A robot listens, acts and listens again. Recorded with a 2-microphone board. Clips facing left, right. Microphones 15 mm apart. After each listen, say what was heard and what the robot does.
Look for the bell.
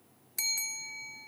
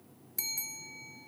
The bell: about 25° left or 155° left. Turn 25° left.
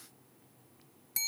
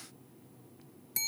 Found it: a bell, straight ahead.